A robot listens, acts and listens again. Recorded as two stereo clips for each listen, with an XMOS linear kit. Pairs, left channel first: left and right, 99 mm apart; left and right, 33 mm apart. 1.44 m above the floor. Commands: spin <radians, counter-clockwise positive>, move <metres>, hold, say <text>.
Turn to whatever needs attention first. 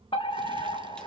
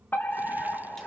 spin 1.05
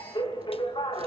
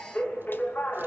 spin 0.96
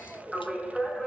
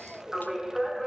say Facing the fire alarm, 2 to 4 m away.